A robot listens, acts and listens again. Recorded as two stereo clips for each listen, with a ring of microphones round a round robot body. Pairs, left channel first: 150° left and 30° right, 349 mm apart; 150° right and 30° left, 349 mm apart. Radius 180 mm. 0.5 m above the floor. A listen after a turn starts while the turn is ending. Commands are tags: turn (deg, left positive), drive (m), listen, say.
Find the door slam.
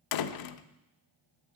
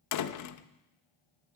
<turn deg="170"/>
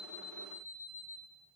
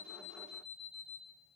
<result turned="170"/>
<say>Facing where the door slam came from. I can't hear it now.</say>